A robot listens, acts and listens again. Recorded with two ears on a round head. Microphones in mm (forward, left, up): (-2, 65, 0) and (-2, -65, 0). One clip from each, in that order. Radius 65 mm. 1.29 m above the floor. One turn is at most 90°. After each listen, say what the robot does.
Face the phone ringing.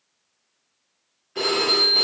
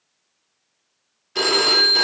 Turn 90° right.
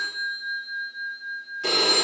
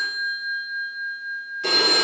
Facing the phone ringing.